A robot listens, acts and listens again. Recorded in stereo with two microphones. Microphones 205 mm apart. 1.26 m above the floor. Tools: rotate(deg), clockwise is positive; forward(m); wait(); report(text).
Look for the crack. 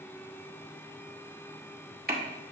rotate(45)
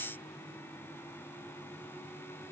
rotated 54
wait()
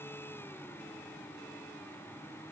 report("I heard a crack, but can't make it out now. It was about 10° left or 80° right.")